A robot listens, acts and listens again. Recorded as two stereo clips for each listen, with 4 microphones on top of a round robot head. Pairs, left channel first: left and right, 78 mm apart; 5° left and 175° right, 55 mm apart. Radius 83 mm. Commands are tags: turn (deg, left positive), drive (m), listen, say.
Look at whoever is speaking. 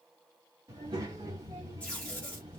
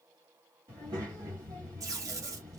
<turn deg="-140"/>
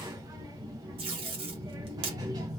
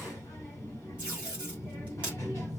<turn deg="-50"/>
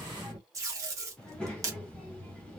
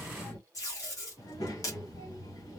<turn deg="10"/>
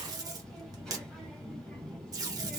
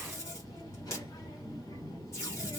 <say>Facing the child speaking, 1 to 2 m away.</say>